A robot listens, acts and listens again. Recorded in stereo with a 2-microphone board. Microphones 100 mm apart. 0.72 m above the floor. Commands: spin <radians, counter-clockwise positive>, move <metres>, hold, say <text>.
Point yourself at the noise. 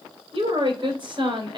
spin -0.87
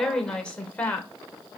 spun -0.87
spin 0.26
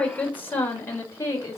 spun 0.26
spin 0.52
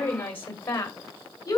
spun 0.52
spin 0.52
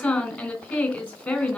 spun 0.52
spin 0.17
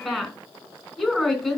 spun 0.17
say Facing the woman speaking.